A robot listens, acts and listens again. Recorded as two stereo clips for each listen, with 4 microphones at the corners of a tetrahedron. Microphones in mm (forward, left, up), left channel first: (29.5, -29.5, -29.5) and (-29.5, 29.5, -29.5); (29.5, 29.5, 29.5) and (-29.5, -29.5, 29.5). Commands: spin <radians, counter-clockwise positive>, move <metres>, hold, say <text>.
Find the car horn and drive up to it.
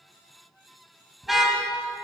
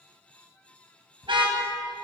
spin -2.36
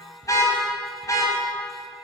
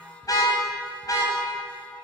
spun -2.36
move 1.0
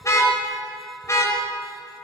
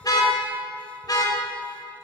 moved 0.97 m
move 1.0
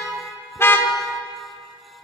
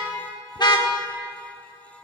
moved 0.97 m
spin 0.26
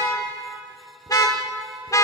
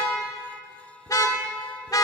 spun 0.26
move 1.0
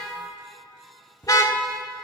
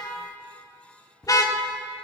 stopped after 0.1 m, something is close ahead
say Arrived at the car horn, straight ahead.